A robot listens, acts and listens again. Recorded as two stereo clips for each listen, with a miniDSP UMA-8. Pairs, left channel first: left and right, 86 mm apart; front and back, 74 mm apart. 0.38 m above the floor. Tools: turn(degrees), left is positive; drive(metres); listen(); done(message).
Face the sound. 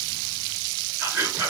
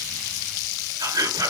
turn(degrees=-155)
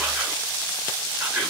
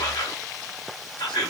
turn(degrees=-10)
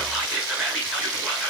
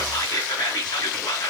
done("Found it: whispering, straight ahead.")